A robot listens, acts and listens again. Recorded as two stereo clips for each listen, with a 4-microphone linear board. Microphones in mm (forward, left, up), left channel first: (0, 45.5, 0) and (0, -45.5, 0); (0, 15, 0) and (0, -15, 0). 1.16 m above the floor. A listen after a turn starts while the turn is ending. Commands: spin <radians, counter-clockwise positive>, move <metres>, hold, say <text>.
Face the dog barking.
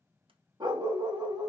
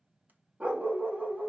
spin -0.96
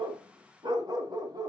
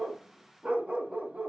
spin -0.96
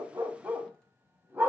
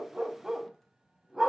spin -0.44
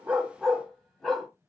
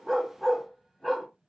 say Facing the dog barking.